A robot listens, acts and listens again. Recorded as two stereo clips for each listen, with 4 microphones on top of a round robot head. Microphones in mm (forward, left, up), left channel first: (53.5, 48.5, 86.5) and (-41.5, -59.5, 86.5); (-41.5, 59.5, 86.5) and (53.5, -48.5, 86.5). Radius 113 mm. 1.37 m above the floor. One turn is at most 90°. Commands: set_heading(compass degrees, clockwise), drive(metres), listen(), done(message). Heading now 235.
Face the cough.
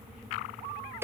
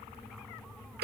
listen()
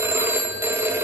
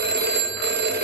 listen()
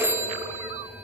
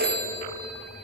done("I can't make out a cough to turn to.")